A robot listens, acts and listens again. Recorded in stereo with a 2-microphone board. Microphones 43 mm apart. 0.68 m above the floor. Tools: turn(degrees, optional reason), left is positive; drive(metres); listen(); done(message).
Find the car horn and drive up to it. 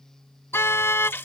turn(degrees=70, reason="The car horn: about 70° left or 110° left.")
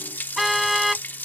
drive(metres=1.0)
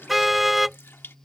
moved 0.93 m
drive(metres=1.0)
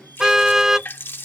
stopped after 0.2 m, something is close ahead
turn(degrees=-10, reason="The car horn is now 10° right.")
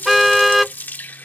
done("I am next to the car horn.")